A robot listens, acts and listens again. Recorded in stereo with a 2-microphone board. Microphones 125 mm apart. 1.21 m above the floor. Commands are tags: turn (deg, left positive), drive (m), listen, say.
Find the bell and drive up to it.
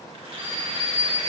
<turn deg="60"/>
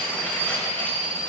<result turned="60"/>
<drive m="1.0"/>
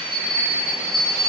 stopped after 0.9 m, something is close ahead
<say>I am next to the bell.</say>